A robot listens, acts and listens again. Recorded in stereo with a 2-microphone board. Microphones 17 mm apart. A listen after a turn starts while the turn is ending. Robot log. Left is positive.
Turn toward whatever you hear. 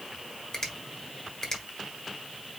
note: The finger snap: about 20° left or 160° left.
cmd yaw +20
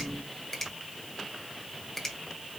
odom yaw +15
end: Found it: a finger snap, straight ahead.